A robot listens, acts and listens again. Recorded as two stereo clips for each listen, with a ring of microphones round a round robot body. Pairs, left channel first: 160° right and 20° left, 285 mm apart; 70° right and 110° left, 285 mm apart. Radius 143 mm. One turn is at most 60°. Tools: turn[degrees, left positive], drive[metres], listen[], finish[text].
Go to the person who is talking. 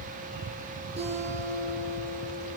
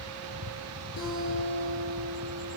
Action: listen[]
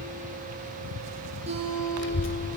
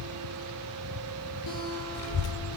Thought: The child speaking: 110° right.
Action: turn[-60]
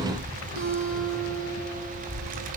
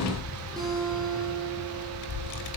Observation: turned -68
Thought: The child speaking is now 40° right.
Action: turn[-40]
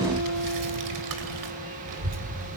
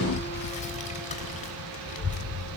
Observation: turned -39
Action: drive[1.0]
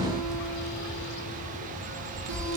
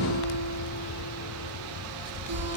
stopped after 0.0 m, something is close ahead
Action: finish[Blocked. The child speaking is further on, straight ahead.]